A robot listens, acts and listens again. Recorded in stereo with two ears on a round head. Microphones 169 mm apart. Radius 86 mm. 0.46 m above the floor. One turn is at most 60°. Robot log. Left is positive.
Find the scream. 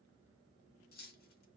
cmd idle
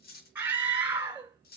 cmd yaw -30
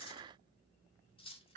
note: So it is at 140° right.
cmd yaw -60
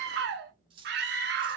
note: The scream is now 75° right.
cmd yaw -60
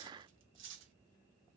note: Nothing new. It was at 15° right.
cmd yaw -15
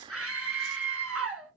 end: Found it: a scream, straight ahead.